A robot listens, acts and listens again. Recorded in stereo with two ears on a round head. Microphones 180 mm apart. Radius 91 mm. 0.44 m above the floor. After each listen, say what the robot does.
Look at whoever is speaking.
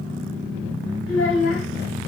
Turn 65° left.
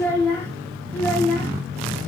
Turn 10° left.
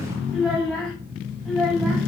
Found it: a child speaking, straight ahead.